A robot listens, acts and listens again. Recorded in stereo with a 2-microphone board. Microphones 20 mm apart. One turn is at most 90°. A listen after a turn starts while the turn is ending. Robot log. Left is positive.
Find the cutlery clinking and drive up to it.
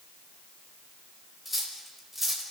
cmd yaw -30
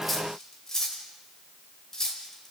note: So it is at 25° left.
cmd yaw +25
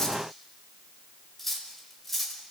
note: The cutlery clinking is now 10° left.
cmd yaw +10
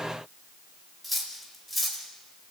cmd fwd 1.0
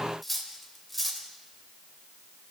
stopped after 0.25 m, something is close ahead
end: Something is in my way. I am facing the cutlery clinking but have not reached it.